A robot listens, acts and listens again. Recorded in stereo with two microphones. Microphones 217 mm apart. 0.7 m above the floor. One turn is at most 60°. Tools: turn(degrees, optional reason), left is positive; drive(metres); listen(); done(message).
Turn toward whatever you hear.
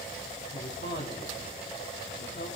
turn(degrees=60, reason="The man speaking: about 65° left or 115° left.")
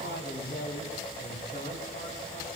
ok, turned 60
turn(degrees=45, reason="So it is at 45° left.")
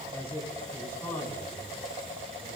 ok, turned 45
turn(degrees=10, reason="The man speaking is now 10° left.")
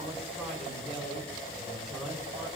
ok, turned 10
done("Found it: a man speaking, straight ahead, over 4 m away.")